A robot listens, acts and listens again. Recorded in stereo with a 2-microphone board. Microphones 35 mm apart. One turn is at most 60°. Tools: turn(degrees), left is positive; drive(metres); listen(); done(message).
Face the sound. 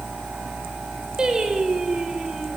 turn(degrees=-20)
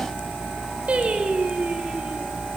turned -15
turn(degrees=-60)
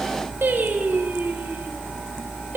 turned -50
turn(degrees=-60)
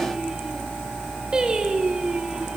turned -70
turn(degrees=-20)
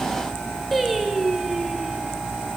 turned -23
done("Found it: singing, straight ahead, over 4 m away.")